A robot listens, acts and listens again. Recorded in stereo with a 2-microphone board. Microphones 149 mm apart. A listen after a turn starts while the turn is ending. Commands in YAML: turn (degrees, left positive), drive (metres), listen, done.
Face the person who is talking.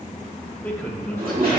turn: 30
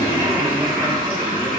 listen: true
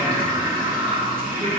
listen: true
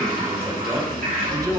turn: -25
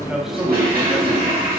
listen: true
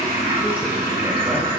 listen: true
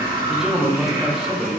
done: "Facing the man speaking, 1 to 2 m away."